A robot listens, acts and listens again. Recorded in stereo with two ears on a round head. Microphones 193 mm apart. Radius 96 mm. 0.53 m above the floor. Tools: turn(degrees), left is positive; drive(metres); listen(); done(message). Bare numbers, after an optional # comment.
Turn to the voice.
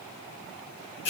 listen()
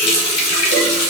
listen()
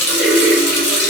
done("I can't make out anyone speaking to turn to.")